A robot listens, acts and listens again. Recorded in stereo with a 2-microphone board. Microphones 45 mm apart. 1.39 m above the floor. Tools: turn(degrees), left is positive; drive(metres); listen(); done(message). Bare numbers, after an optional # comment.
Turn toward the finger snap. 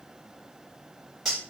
listen()
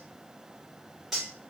listen()
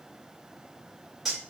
done("I can't make out a finger snap to turn to.")